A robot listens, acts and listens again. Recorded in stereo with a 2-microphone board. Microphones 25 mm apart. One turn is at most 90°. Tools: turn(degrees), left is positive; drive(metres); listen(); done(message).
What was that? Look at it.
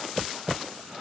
listen()
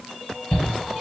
turn(degrees=25)
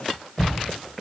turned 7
turn(degrees=20)
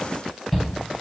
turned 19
done("Facing the shout.")